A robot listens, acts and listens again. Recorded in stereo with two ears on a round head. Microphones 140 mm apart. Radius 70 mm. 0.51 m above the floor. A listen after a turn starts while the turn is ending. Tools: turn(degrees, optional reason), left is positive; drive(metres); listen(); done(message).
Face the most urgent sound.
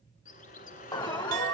turn(degrees=25, reason="The alarm: about 25° left or 155° left.")
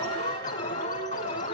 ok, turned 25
turn(degrees=125, reason="So it is at 125° left.")
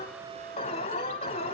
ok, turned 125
turn(degrees=40, reason="The alarm is now 40° left.")
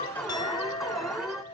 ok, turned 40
done("Facing the alarm.")